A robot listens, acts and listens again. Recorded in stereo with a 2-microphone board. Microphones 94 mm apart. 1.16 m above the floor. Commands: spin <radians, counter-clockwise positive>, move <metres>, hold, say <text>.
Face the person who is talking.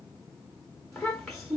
spin 0.52
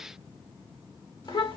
spin 2.44
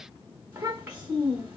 spin -0.35
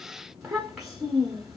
say Facing the child speaking.